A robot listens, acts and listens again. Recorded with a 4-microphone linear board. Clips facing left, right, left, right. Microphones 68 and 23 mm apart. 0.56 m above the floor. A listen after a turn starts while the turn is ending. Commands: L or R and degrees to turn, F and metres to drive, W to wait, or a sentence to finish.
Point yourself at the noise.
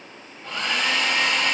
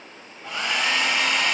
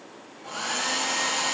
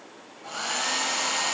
R30
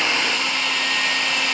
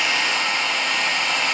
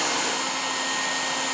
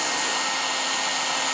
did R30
R135
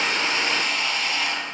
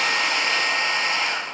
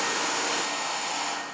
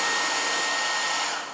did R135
R40
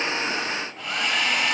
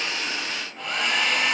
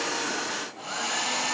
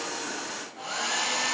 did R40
Facing the hair dryer, 1 to 2 m away.